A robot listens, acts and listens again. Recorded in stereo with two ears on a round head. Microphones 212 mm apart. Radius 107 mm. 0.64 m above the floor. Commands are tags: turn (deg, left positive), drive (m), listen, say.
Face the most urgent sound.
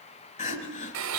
<turn deg="30"/>
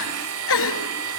<turn deg="115"/>
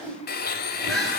<listen/>
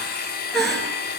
<say>Found it: crying, straight ahead, 2 to 4 m away.</say>